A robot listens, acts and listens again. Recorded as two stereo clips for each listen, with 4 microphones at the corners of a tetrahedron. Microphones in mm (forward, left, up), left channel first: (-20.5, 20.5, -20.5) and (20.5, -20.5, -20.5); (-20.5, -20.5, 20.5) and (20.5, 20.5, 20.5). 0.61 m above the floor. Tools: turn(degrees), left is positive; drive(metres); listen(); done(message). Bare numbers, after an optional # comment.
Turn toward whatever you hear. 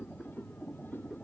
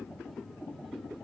listen()
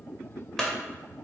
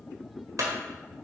# The clunk: 55° left.
turn(55)
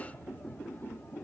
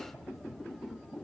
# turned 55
done("I heard a clunk from this way, but can't make it out now.")